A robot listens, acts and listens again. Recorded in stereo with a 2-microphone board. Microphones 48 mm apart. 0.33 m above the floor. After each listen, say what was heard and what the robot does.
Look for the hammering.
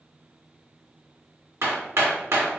The hammering: about 70° right or 110° right. Turn 70° right.
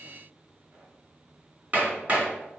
So it is at 30° right. Turn 30° right.
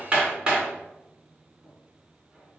The hammering is now 20° right. Turn 20° right.
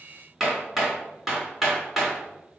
Facing the hammering, 2 to 4 m away.